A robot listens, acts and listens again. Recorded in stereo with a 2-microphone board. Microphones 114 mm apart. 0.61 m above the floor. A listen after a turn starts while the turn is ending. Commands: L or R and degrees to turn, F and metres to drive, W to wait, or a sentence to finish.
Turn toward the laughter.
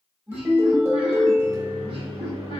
R50
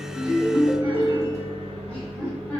L10
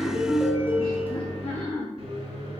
Facing the laughter, 2 to 4 m away.